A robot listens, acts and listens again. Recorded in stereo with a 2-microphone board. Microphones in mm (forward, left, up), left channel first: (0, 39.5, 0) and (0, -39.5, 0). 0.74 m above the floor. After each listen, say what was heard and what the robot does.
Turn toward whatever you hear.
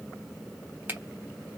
The finger snap: about 25° right or 155° right. Turn 25° right.
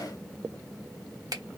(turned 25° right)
So it is at 130° right. Turn 130° right.
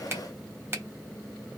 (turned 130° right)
The finger snap is now 35° right. Turn 35° right.
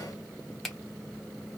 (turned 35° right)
Facing the finger snap, 1 to 2 m away.